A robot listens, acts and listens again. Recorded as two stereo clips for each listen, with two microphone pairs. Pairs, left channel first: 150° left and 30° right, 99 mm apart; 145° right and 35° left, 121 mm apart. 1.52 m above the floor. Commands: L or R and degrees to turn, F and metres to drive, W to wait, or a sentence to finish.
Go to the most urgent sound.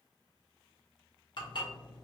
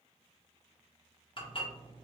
W
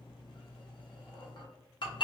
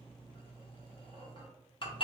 W
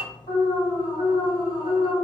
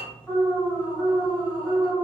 L135
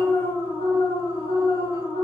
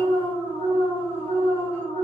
R15
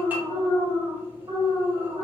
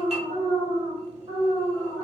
F1.0
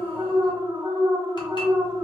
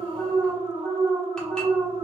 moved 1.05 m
R15
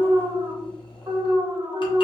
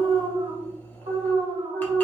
F1.0
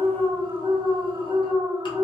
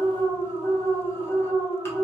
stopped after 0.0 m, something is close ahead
Arrived at the alarm, straight ahead.